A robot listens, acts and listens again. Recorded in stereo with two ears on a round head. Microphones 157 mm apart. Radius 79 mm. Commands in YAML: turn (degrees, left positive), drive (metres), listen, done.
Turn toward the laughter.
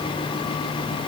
listen: true
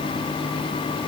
listen: true
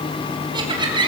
turn: -25
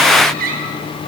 turn: -130
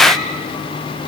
listen: true
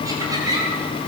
turn: -20
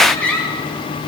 done: "Found it: laughter, straight ahead."